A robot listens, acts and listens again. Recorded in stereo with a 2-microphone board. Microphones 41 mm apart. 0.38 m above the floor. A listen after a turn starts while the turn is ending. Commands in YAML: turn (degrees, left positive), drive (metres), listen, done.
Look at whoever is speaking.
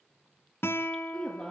turn: 20
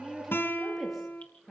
done: "Facing the woman speaking."